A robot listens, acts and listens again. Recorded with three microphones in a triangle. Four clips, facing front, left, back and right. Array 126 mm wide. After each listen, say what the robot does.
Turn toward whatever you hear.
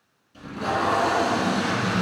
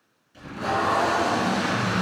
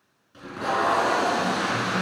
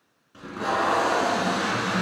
Turn 115° right.
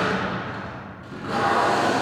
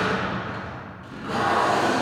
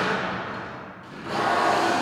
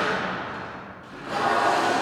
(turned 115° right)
Turn 15° left.
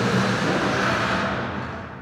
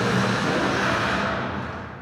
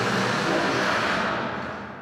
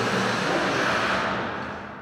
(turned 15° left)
Found it: tape being pulled, straight ahead.